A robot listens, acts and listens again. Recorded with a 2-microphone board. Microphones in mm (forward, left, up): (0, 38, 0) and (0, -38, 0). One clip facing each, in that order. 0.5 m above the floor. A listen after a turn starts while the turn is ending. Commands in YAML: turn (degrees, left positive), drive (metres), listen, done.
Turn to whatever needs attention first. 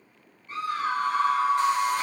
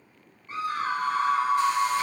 turn: -25
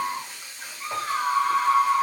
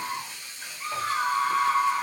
done: "Found it: a scream, straight ahead, 1 to 2 m away."